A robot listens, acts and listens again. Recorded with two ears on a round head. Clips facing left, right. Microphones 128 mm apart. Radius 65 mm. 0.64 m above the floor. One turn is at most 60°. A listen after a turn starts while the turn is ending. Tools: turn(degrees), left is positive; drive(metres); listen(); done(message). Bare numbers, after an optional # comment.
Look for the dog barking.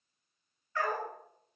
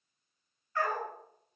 turn(60)
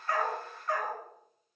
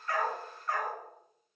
done("Facing the dog barking.")